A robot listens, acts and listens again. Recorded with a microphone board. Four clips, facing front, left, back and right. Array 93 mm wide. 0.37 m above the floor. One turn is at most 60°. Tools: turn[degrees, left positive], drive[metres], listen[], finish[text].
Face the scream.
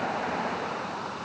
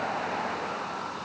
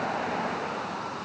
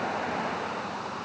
Action: listen[]
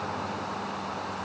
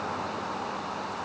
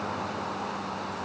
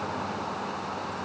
Action: listen[]
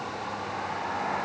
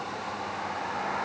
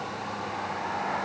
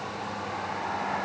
Action: finish[I can't make out a scream to turn to.]